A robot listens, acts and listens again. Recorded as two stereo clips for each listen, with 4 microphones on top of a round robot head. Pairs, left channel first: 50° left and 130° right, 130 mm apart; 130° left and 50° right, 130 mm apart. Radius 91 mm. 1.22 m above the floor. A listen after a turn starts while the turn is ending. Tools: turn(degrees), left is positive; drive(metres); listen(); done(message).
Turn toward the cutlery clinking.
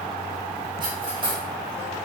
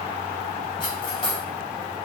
turn(degrees=180)
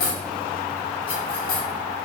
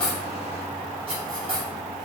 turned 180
done("Facing the cutlery clinking.")